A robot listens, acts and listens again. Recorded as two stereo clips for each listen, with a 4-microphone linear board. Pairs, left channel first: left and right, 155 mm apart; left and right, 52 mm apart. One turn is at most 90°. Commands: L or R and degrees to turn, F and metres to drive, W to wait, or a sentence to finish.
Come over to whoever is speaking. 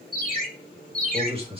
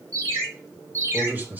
R35
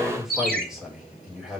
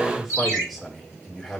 F1.0
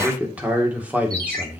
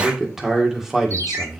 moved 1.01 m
R10
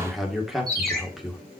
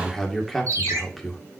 F1.0
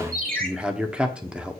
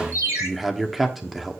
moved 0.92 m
F1.0
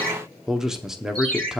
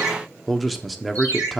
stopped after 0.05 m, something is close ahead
I am next to the man speaking.